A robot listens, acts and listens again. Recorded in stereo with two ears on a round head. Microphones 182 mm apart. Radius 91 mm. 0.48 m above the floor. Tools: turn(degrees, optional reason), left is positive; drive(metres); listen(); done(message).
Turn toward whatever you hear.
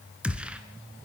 turn(degrees=-30)
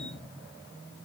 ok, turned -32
listen()
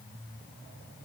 done("I heard a gunshot, but can't make it out now. It was about 25° left or 140° right.")